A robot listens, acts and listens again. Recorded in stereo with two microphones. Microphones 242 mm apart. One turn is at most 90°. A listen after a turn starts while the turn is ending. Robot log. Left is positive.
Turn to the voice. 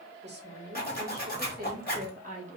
note: The woman speaking: about 30° right or 150° right.
cmd yaw -30
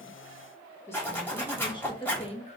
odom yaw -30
note: So it is at 25° left.
cmd yaw +25
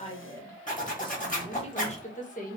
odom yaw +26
note: The woman speaking is now 30° left.
cmd yaw +30
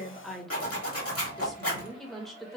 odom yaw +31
end: Facing the woman speaking.